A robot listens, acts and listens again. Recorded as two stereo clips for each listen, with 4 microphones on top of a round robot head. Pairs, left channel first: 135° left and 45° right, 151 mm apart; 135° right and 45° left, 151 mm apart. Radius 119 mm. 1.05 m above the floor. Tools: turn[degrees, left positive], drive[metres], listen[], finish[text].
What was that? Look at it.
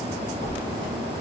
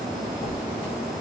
Thought: The squeak: 170° left.
Action: turn[170]
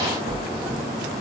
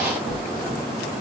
Thought: The squeak is now 15° left.
Action: turn[15]
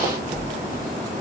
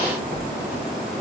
Action: finish[Facing the squeak.]